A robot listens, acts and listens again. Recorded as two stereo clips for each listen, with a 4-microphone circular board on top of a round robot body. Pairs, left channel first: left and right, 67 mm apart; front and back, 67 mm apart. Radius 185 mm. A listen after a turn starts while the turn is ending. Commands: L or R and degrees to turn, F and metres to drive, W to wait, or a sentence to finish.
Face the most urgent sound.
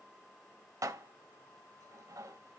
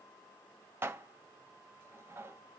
W
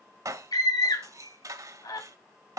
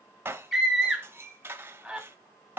L95
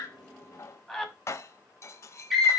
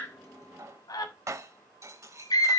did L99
Facing the scream.